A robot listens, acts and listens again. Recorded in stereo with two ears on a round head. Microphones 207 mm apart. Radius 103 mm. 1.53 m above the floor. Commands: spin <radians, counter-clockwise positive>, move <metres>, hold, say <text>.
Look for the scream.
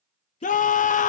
spin 0.61
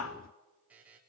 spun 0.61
spin 2.01
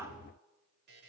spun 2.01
hold
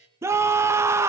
spin -0.17
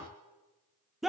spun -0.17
say Facing the scream.